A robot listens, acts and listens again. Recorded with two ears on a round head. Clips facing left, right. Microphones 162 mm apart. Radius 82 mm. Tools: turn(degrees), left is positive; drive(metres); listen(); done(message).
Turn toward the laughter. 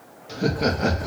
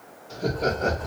turn(degrees=90)
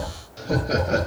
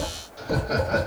turn(degrees=35)
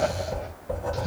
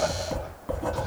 listen()
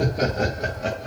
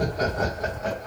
turn(degrees=35)
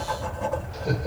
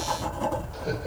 listen()
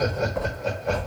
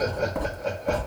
done("Found it: laughter, straight ahead, 1 to 2 m away.")